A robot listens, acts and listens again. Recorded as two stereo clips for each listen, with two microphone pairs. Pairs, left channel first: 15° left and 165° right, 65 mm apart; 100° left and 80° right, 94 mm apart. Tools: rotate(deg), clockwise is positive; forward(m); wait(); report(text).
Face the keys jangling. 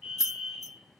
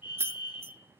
rotate(20)
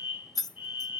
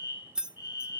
report("Found it: keys jangling, straight ahead.")